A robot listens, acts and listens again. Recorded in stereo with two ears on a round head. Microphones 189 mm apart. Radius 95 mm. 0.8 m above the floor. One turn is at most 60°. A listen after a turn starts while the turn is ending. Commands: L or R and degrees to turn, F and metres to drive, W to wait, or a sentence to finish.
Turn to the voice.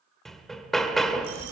L60
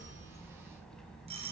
Found it: a child speaking, straight ahead.